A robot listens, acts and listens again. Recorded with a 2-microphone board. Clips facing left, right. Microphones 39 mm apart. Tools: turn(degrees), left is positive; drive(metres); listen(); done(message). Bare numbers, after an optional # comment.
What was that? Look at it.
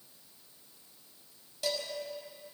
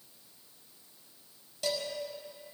turn(30)
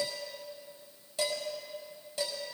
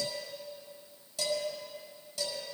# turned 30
# So it is at 140° left.
turn(140)
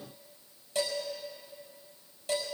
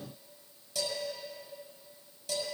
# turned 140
# The dishes clattering is now 30° left.
turn(30)
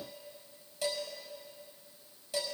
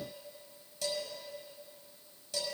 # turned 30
# The dishes clattering is now 15° left.
turn(15)
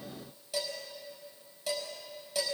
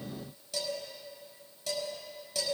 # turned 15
# The dishes clattering is now 10° left.
turn(10)
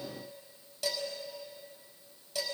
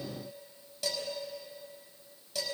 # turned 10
done("Found it: dishes clattering, straight ahead.")